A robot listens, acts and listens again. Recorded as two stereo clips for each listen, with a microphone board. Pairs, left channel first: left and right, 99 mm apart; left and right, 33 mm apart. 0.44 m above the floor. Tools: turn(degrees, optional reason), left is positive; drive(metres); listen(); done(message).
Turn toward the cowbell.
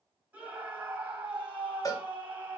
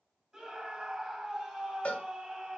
turn(degrees=35, reason="The cowbell: about 35° left or 145° left.")
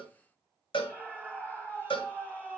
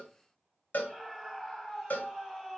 turn(degrees=105, reason="So it is at 105° left.")
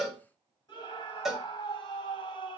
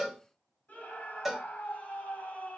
done("Found it: a cowbell, straight ahead, 1 to 2 m away.")